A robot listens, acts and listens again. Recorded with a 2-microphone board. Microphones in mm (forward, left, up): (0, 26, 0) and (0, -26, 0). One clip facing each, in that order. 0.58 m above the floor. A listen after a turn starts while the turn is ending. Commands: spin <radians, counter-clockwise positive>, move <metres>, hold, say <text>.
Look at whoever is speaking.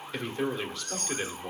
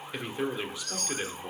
spin -0.52
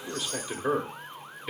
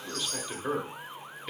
spin 0.26
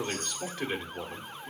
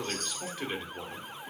say Facing the man speaking, 1 to 2 m away.